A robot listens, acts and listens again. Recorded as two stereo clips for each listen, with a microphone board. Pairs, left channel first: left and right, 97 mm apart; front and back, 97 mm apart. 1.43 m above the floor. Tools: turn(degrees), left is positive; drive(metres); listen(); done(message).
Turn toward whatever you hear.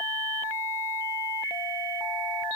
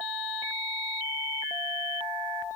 listen()
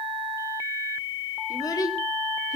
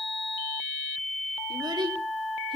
turn(degrees=145)
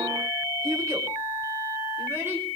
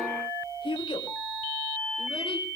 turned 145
turn(degrees=-30)
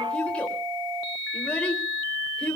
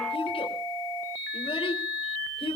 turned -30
turn(degrees=10)
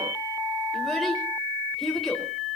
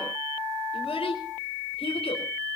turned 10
done("Found it: a child speaking, straight ahead, over 4 m away.")